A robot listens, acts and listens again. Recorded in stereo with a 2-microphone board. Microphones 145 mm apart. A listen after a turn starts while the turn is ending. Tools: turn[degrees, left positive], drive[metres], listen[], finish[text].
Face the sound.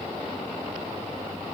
Action: listen[]
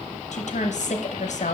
Thought: The woman speaking: about 60° left or 120° left.
Action: turn[60]
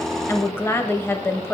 Thought: So it is at 20° left.
Action: turn[20]
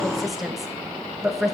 Action: finish[Found it: a woman speaking, straight ahead, under 1 m away.]